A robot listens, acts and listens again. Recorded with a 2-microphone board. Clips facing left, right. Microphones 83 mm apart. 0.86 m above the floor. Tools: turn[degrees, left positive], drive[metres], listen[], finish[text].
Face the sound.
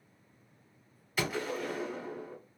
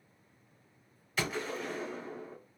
Action: turn[30]
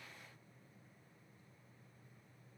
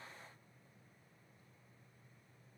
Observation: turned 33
Action: listen[]
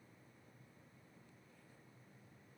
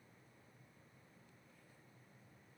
Action: finish[I heard a gunshot, but can't make it out now. It was about 25° right or 140° left.]